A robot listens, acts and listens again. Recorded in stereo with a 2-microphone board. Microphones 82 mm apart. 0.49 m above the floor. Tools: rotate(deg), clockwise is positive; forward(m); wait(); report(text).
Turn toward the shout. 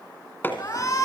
rotate(-40)
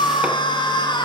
rotate(-95)
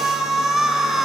report("Facing the shout, over 4 m away.")